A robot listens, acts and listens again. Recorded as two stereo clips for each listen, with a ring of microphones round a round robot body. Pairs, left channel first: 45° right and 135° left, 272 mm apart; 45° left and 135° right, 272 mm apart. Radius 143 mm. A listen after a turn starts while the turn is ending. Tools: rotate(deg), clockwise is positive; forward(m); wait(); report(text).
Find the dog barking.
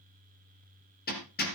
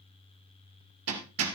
wait()
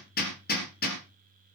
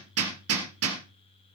wait()
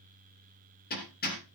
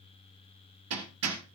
report("I can't make out a dog barking, only hammering.")